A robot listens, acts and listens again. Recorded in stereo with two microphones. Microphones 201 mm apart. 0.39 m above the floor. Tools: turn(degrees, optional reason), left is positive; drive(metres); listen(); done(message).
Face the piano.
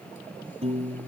turn(degrees=-35, reason="The piano: about 35° right or 145° right.")
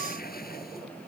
listen()
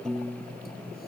done("Found it: a piano, straight ahead.")